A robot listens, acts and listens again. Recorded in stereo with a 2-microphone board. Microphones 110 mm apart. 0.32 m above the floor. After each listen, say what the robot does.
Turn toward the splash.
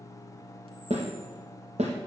Keep listening.
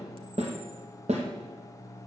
Keep listening.
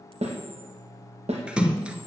Turn 30° right.
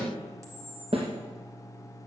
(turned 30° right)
Keep listening.
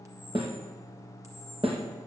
I heard a splash, but can't make it out now. It was about 20° left or 140° right.